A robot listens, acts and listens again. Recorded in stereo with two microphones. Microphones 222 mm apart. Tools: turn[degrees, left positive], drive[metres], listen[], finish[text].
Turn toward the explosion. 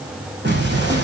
Thought: The explosion: about 50° right or 130° right.
Action: turn[-50]
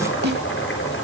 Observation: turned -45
Action: listen[]
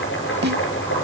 Action: finish[I heard an explosion, but can't make it out now. It was about 5° right or 85° right.]